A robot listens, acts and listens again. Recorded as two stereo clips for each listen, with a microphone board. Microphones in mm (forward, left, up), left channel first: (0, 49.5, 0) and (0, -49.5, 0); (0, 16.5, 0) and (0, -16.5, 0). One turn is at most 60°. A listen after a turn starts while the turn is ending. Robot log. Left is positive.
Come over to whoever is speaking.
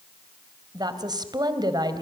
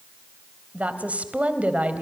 note: The woman speaking: about 45° right or 135° right.
cmd yaw -45
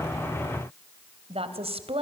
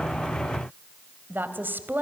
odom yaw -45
note: So it is at 90° right.
cmd yaw -60
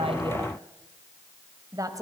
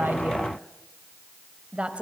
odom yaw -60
note: The woman speaking is now 35° right.
cmd yaw -35
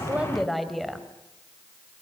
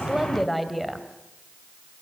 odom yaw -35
cmd fwd 1.0
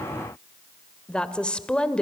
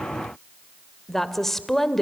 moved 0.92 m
note: The woman speaking is now 10° left.
cmd yaw +10
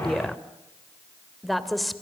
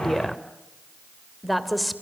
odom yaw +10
cmd fwd 1.0
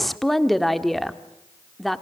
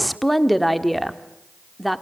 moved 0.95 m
cmd fwd 1.0
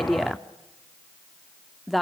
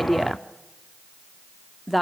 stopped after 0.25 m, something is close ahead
end: I am next to the woman speaking.